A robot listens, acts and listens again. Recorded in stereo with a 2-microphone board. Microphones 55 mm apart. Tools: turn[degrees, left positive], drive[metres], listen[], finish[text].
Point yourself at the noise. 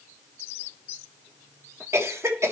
Thought: The cough: about 55° right or 125° right.
Action: turn[-55]
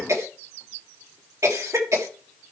Thought: So it is at 65° right.
Action: turn[-65]
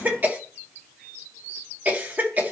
Thought: The cough is now 35° right.
Action: turn[-35]
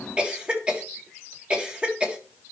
Thought: The cough is now 20° right.
Action: turn[-20]
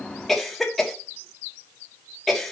Action: finish[Facing the cough, 1 to 2 m away.]